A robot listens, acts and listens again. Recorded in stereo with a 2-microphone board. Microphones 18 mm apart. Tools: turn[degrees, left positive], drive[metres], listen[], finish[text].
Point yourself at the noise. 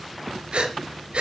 Action: turn[-90]
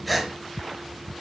Action: finish[Facing the breathing, 2 to 4 m away.]